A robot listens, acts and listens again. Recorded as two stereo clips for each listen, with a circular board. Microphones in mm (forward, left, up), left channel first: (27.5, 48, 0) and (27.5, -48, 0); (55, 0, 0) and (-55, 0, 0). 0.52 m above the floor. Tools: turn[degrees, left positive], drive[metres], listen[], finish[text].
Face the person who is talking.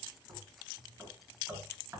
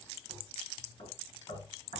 Action: listen[]
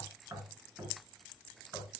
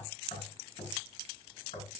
Action: listen[]
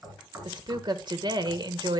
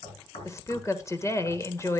Thought: The woman speaking: 60° right.
Action: turn[-60]
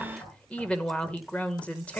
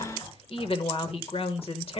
Thought: The woman speaking is now 15° left.
Action: turn[15]
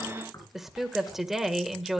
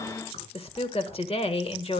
Action: finish[Found it: a woman speaking, straight ahead, 1 to 2 m away.]